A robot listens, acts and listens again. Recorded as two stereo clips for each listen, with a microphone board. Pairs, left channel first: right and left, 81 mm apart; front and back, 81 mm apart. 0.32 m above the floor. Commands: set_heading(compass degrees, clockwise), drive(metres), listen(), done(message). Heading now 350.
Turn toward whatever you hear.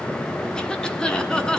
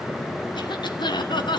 set_heading(0)
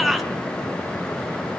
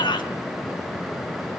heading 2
done("Facing the cough, 2 to 4 m away.")